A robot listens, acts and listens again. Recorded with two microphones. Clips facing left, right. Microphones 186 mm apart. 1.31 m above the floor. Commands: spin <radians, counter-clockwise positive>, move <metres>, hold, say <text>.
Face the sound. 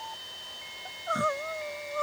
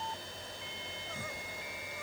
spin 1.57
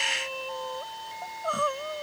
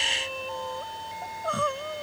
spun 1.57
say Facing the crying.